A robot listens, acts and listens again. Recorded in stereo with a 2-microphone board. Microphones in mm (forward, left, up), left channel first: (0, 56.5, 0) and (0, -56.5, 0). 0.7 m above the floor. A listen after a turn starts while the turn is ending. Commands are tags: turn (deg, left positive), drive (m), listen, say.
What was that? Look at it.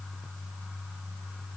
<listen/>
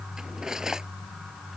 <turn deg="-30"/>
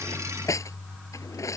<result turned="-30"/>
<turn deg="30"/>
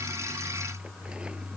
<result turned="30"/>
<listen/>
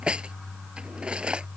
<turn deg="-10"/>
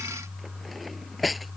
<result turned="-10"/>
<say>Found it: cutlery clinking, straight ahead.</say>